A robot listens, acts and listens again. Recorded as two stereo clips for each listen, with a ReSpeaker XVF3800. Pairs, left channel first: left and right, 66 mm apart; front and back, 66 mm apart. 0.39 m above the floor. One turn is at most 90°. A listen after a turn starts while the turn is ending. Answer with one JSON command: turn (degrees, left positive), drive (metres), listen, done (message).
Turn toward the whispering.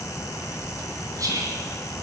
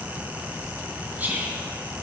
{"turn": -90}
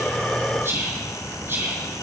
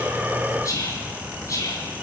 {"turn": -35}
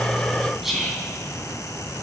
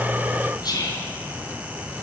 {"done": "Facing the whispering."}